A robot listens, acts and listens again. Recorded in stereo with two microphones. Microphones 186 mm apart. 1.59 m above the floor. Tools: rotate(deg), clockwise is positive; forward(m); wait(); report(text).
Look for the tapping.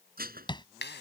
rotate(-25)
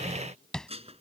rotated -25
report("Found it: tapping, straight ahead.")